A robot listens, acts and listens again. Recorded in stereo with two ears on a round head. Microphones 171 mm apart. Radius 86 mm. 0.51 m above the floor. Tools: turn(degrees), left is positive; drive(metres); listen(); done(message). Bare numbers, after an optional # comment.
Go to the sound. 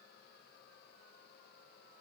listen()
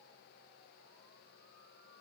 listen()
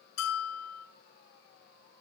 turn(90)
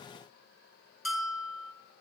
drive(1.0)
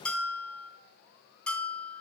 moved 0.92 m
drive(1.0)
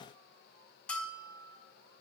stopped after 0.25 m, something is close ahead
done("Arrived at the bell, straight ahead.")